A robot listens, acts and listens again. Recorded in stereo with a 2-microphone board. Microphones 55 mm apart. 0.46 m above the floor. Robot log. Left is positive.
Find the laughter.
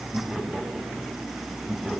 cmd yaw -30
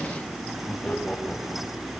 note: So it is at 10° left.
cmd yaw +10
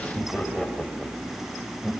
end: Facing the laughter.